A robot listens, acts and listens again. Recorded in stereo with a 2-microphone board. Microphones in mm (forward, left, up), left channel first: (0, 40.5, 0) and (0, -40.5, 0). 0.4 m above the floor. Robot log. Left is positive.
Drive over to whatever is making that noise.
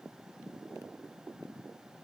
cmd idle
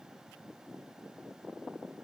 cmd idle
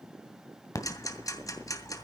note: The ticking: about 50° left or 130° left.
cmd yaw +50
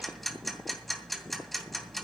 cmd fwd 1.0
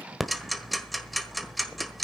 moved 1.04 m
cmd fwd 1.0
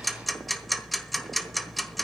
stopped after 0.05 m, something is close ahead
end: Arrived at the ticking, straight ahead.